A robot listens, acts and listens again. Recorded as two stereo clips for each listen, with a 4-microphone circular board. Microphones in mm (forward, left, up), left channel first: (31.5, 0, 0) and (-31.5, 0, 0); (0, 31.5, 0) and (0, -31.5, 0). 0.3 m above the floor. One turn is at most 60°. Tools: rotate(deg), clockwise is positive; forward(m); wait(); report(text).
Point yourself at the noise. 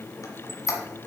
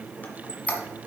rotate(-30)
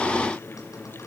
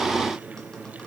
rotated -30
wait()
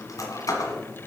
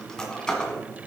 rotate(-10)
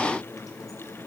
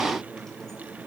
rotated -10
wait()
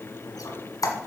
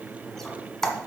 report("Found it: a squeak, straight ahead, 1 to 2 m away.")